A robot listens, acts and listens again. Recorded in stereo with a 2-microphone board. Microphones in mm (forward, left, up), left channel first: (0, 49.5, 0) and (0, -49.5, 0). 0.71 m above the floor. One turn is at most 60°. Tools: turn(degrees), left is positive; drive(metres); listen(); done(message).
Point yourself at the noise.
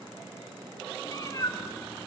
turn(degrees=35)
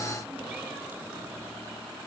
listen()
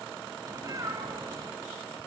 turn(degrees=-35)
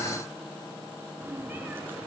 turn(degrees=-20)
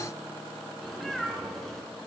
done("Facing the cat meowing.")